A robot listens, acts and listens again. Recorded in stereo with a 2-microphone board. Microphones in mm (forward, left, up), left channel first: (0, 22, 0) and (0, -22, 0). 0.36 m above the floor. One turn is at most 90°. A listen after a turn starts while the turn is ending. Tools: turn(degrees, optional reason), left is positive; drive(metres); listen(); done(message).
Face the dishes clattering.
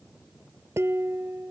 turn(degrees=-90)
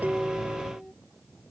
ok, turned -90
done("Found it: dishes clattering, straight ahead.")